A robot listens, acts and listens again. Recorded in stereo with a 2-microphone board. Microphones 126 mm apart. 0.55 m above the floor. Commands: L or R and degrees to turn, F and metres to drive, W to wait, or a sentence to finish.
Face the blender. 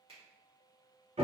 W
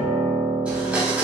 R30
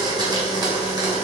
R140
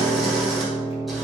W
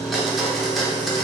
Found it: a blender, straight ahead, under 1 m away.